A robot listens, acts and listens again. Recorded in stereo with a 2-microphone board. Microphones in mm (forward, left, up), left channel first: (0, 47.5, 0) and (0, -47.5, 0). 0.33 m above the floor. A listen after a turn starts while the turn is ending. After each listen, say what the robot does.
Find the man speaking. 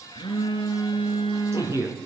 Turn 30° right.
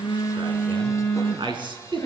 Turn 120° right.
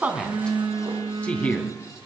Turn 15° left.
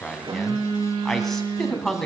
Found it: a man speaking, straight ahead.